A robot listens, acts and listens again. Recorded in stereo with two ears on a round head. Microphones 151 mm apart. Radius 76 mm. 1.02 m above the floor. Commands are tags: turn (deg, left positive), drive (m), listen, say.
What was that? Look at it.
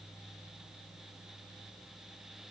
<listen/>
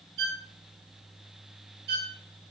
<turn deg="-60"/>
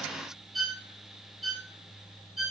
<say>Found it: a violin, straight ahead, under 1 m away.</say>